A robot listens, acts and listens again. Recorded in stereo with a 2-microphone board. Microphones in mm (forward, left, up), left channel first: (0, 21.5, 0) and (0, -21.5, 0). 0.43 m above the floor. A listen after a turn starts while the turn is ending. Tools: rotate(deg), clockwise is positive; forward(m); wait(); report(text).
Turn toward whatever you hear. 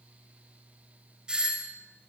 rotate(15)
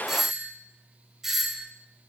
report("Facing the doorbell.")